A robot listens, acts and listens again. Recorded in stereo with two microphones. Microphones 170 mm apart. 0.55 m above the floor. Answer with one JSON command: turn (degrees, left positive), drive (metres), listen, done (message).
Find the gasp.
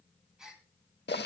{"turn": -30}
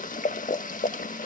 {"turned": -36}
{"listen": true}
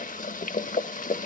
{"done": "I heard a gasp, but can't make it out now. It was about 35° left or 140° right."}